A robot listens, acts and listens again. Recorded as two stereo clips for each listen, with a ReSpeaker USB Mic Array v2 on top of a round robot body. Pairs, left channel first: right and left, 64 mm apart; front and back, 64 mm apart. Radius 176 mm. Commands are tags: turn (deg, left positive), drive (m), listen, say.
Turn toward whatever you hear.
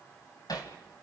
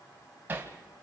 <turn deg="-120"/>
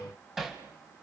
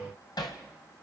<say>Found it: hammering, straight ahead.</say>